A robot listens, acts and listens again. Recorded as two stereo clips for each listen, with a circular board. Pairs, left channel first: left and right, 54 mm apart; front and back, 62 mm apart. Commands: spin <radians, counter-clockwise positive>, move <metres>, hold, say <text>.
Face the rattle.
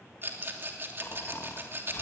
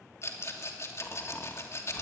spin -0.70
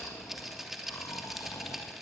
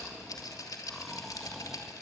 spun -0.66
say Facing the rattle, 2 to 4 m away.